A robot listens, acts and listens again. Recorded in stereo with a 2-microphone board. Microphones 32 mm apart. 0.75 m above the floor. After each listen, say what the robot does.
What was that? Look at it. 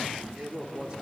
Turn 35° right.
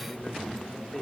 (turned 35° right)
Turn 15° left.
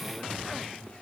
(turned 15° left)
Keep listening.
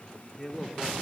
Turn 10° left.
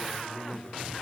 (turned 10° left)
Turn 15° left.
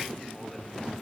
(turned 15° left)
Keep listening.
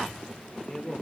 Turn 15° left.
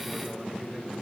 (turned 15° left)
Keep listening.
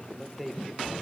Found it: a man speaking, straight ahead, 2 to 4 m away.